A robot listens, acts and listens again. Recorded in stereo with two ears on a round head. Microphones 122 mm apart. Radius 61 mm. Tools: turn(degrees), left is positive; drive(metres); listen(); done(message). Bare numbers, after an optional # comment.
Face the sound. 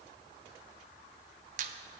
# The squeak: about 65° right or 115° right.
turn(-65)
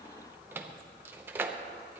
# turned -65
# So it is at 20° right.
turn(-20)
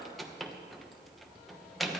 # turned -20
done("Found it: a squeak, straight ahead, 1 to 2 m away.")